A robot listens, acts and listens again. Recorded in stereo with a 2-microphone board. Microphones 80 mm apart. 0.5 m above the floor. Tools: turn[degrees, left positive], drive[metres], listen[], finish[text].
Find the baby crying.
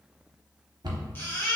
Thought: The baby crying: about 25° left or 155° left.
Action: turn[25]
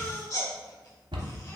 Thought: So it is at 130° left.
Action: turn[130]
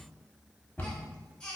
Thought: The baby crying is now 15° left.
Action: turn[15]
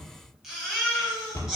Action: finish[Found it: a baby crying, straight ahead, 1 to 2 m away.]